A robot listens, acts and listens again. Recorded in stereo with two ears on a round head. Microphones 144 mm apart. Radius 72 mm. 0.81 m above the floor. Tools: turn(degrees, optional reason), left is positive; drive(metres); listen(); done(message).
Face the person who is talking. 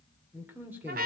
turn(degrees=-30)
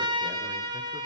listen()
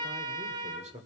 turn(degrees=-135, reason="So it is at 135° right.")
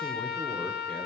listen()
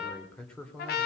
done("Found it: a man speaking, straight ahead.")